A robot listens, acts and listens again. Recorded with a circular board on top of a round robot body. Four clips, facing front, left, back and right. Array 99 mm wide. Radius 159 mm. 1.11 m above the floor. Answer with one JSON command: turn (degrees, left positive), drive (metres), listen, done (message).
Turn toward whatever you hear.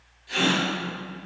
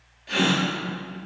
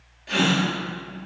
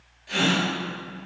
{"turn": 160}
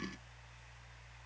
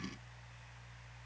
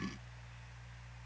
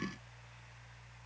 {"done": "Facing where the gasp came from. I can't hear it now."}